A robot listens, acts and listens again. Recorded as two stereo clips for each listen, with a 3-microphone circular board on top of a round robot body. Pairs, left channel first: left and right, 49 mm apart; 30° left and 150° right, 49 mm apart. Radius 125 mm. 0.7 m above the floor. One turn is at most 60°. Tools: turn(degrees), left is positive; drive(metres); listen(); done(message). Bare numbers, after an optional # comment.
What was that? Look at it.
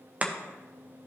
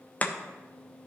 # The chopping: 30° right.
turn(-30)
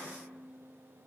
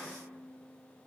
listen()
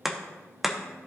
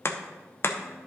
done("Found it: chopping, straight ahead, under 1 m away.")